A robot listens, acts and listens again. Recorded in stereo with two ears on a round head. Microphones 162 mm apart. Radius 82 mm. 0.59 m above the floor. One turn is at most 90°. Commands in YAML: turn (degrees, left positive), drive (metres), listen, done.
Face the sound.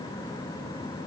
listen: true
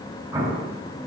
turn: -20
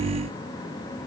listen: true
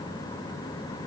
done: "I heard an explosion, but can't make it out now. It was about straight ahead or 140° right."